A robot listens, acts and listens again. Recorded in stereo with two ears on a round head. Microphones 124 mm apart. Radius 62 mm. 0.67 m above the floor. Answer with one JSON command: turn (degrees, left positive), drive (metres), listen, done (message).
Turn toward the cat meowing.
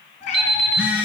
{"turn": 55}
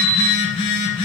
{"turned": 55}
{"listen": true}
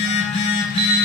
{"listen": true}
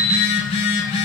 {"done": "I heard a cat meowing, but can't make it out now. It was about straight ahead or 70° left."}